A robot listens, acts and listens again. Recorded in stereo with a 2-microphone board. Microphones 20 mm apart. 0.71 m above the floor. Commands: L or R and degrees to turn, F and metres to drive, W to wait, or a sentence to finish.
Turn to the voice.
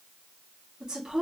R35
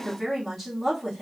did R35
Found it: a woman speaking, straight ahead.